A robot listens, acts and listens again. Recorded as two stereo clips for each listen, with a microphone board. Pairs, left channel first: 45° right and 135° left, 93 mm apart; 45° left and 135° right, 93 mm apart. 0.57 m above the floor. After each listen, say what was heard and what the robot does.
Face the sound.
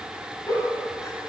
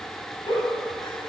Facing the giggle.